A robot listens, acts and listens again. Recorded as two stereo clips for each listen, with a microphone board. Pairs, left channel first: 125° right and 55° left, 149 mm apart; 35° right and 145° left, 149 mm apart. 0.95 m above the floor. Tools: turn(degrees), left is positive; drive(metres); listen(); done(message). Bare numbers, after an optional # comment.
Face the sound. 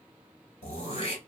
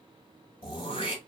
# The throat clearing: 85° right.
turn(-85)
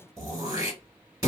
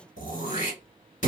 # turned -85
# The throat clearing is now 10° right.
turn(-10)
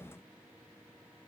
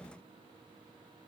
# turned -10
done("Found it: throat clearing, straight ahead, 1 to 2 m away.")